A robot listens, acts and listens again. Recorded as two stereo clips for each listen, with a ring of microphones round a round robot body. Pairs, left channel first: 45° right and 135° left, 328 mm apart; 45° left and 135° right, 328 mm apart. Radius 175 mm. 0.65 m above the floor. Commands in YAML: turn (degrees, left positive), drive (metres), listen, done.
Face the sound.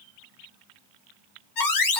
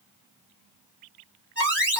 turn: -50
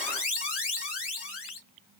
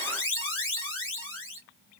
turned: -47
done: "Found it: an alarm, straight ahead, 2 to 4 m away."